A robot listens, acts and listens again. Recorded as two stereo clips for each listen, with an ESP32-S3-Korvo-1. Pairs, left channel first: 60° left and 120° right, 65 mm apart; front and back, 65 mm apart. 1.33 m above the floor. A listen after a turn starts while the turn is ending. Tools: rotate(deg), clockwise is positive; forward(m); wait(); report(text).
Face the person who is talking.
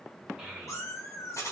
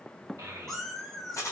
rotate(-160)
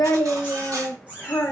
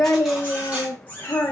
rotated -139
rotate(-20)
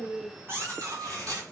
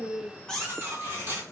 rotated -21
wait()
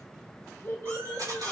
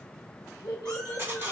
report("Facing the child speaking.")